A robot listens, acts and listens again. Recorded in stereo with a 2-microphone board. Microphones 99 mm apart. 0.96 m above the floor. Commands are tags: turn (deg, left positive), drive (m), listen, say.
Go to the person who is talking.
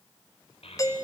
<turn deg="90"/>
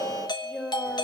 <drive m="1.0"/>
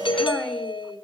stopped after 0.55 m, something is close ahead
<say>Blocked. The child speaking is further on, straight ahead.</say>